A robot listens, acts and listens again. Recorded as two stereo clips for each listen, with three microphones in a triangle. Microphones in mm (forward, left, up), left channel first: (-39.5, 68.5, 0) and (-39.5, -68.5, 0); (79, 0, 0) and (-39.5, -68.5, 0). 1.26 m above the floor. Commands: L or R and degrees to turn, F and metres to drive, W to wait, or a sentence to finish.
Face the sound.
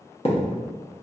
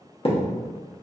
L60
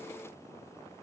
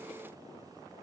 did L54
I heard a thud from this way, but can't make it out now.